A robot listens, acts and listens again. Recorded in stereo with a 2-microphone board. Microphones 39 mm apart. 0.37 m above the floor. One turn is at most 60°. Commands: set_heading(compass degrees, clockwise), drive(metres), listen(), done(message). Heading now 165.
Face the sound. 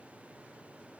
listen()
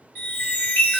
set_heading(120)
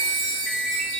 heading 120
done("Facing the chime, 1 to 2 m away.")